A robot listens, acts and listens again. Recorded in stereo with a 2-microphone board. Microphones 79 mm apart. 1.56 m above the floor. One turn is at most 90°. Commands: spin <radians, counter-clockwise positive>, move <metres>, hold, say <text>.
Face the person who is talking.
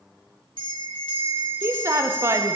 spin -0.61
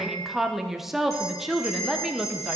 say Facing the woman speaking.